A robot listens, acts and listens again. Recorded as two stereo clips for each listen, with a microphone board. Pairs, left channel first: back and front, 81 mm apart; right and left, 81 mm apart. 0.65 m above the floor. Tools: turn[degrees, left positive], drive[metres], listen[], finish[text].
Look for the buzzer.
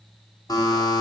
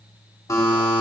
Thought: The buzzer: 140° right.
Action: turn[-140]
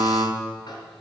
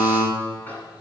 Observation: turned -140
Thought: The buzzer is now 30° right.
Action: turn[-30]
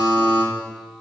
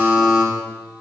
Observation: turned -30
Thought: The buzzer is now 10° left.
Action: turn[10]
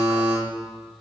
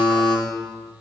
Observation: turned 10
Action: finish[Facing the buzzer.]